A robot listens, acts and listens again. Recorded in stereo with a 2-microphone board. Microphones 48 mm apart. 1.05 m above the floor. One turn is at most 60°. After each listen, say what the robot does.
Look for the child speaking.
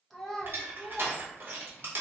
Turn 30° left.
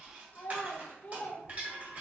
Turn 60° left.
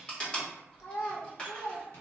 Turn 60° left.
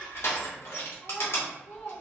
Turn 20° left.
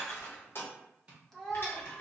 Facing the child speaking.